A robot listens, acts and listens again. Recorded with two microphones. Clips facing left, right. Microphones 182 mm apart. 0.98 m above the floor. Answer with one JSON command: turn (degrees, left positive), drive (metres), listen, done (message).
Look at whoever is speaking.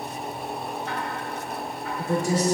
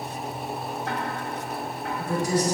{"turn": 25}
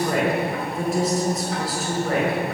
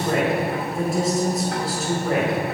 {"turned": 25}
{"done": "Found it: a woman speaking, straight ahead, over 4 m away."}